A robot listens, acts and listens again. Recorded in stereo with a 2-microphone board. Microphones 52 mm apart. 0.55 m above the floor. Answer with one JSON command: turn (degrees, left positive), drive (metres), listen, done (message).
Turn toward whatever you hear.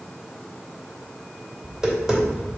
{"turn": -30}
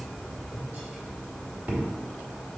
{"turn": -140}
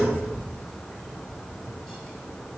{"turn": 10}
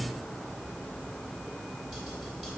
{"done": "Facing the tapping."}